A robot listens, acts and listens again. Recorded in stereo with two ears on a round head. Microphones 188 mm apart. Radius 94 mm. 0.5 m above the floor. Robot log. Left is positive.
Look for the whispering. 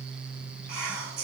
note: The whispering: about 70° right or 110° right.
cmd yaw -70
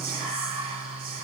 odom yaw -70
note: So it is at 30° right.
cmd yaw -30
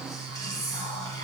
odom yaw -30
note: The whispering is now 20° left.
cmd yaw +20
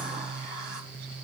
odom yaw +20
cmd idle
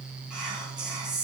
end: Facing the whispering, 2 to 4 m away.